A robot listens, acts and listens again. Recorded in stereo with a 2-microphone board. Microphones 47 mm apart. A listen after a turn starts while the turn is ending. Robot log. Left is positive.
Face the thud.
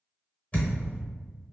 note: The thud: about 35° left or 145° left.
cmd yaw +35
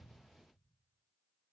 cmd idle
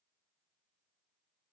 end: I heard a thud, but can't make it out now. It was about straight ahead or 110° left.